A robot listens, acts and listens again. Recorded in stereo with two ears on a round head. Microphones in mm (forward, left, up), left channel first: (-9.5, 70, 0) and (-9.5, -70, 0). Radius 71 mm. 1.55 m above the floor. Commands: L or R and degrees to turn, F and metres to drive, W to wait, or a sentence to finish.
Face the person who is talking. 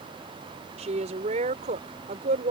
R50
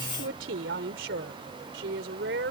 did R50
R75
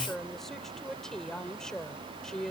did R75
Found it: a woman speaking, straight ahead.